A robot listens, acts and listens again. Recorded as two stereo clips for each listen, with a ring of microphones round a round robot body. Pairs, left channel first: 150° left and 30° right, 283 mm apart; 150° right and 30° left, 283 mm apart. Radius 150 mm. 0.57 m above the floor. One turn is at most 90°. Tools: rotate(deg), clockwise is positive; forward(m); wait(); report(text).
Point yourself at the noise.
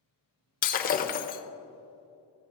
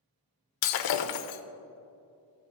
rotate(90)
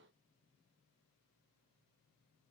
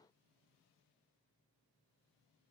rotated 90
rotate(60)
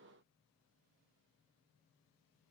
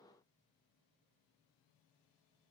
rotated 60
report("Facing where the breaking glass came from. I can't hear it now.")